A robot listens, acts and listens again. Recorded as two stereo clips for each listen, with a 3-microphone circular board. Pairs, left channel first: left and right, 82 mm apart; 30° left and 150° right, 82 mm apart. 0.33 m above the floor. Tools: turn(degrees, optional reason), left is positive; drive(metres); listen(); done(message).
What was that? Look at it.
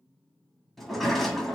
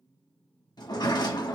done("Found it: a sliding door, straight ahead.")